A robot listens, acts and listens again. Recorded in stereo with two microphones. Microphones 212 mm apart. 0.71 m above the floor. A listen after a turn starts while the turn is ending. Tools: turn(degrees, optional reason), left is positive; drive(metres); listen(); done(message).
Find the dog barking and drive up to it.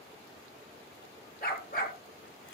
turn(degrees=40, reason="The dog barking: about 40° left or 140° left.")
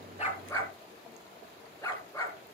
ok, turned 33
turn(degrees=10, reason="So it is at 10° left.")
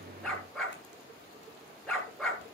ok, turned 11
drive(metres=1.0)
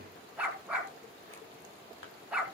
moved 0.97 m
drive(metres=1.0)
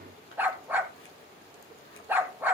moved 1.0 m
turn(degrees=-10, reason="The dog barking is now 10° right.")
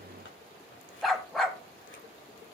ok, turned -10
drive(metres=1.0)
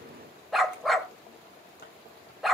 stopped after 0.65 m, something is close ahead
done("Arrived at the dog barking, straight ahead.")